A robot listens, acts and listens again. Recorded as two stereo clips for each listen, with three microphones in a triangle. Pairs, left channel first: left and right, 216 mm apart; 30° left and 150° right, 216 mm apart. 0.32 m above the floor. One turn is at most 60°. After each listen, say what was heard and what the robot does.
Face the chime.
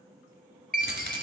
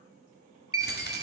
The chime: 140° right. Turn 60° right.
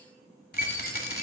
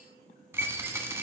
The chime is now 70° right. Turn 60° right.
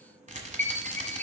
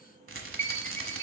The chime is now 10° left. Turn 10° left.
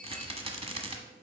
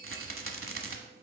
Keep listening.
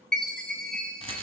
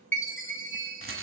Found it: a chime, straight ahead, 1 to 2 m away.